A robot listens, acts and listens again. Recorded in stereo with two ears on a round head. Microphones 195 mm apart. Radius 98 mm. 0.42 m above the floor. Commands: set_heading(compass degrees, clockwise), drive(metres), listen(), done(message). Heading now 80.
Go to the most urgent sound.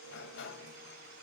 listen()
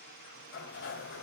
listen()
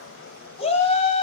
set_heading(50)
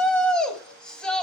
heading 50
drive(1.0)
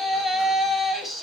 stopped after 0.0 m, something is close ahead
done("Blocked. The shout is further on, straight ahead.")